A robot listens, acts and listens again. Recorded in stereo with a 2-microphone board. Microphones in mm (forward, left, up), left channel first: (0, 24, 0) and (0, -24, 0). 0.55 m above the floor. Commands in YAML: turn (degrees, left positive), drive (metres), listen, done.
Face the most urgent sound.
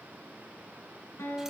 listen: true
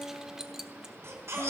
turn: -75
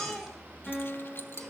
done: "Facing the baby crying, 2 to 4 m away."